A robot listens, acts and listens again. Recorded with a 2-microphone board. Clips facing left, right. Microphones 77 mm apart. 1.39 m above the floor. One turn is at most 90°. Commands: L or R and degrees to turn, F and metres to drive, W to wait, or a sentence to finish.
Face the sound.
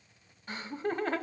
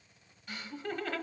L30
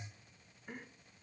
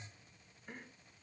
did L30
Found it: laughter, straight ahead.